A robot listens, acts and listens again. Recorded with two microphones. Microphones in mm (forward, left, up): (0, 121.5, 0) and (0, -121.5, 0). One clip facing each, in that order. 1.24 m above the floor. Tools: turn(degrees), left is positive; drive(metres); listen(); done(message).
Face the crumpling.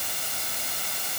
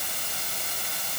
listen()
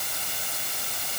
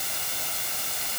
listen()
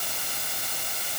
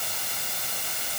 done("I can't make out crumpling to turn to.")